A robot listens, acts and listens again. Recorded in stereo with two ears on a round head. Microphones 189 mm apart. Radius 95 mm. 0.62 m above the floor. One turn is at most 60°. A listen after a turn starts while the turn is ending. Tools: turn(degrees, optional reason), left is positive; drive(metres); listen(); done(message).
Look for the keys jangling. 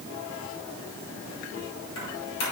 turn(degrees=60)
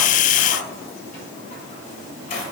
turn(degrees=45, reason="So it is at 45° left.")
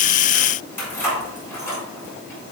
turn(degrees=15, reason="The keys jangling is now 15° left.")
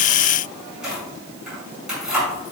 done("Facing the keys jangling, over 4 m away.")